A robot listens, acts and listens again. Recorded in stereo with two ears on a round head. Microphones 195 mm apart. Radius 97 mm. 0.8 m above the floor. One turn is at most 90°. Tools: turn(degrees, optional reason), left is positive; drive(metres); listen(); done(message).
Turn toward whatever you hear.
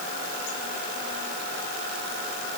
listen()
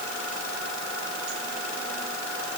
listen()
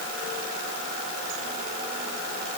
done("I can't make out anything.")